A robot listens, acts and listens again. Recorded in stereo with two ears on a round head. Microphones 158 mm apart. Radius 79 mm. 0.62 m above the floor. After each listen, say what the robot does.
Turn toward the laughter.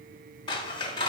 Keep listening.
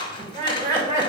Turn 45° right.
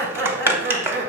Turn 105° right.
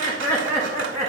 Turn 15° right.
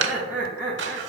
Found it: laughter, straight ahead.